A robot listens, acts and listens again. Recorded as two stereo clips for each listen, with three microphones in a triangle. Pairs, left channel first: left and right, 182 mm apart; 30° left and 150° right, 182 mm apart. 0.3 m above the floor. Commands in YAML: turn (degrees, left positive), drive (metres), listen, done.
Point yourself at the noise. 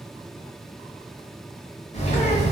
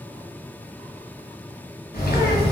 turn: 45
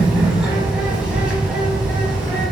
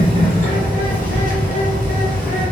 done: "Found it: a bird, straight ahead, 1 to 2 m away."